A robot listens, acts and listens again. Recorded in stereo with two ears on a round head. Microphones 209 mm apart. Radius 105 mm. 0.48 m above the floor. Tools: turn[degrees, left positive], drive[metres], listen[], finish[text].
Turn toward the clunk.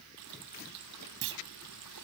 Thought: The clunk: about 60° right or 120° right.
Action: turn[-60]
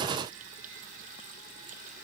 Action: listen[]
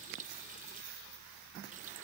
Action: finish[I heard a clunk, but can't make it out now. It was about straight ahead or 60° right.]